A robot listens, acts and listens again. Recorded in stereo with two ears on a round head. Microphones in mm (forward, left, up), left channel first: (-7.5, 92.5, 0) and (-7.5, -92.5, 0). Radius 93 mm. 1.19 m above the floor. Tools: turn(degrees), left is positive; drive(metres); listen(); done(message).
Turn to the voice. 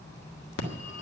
listen()
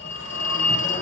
listen()
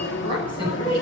turn(degrees=30)
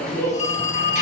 turn(degrees=120)
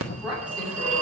turn(degrees=-10)
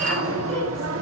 listen()
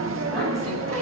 listen()
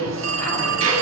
done("I heard a woman speaking from this way, but can't make it out now.")